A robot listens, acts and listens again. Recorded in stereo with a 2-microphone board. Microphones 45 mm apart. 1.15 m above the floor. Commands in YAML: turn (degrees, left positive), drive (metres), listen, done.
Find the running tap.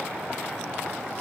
listen: true
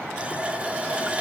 turn: -25
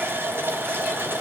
turn: -130
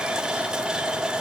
turn: -15
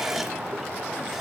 done: "Facing the running tap."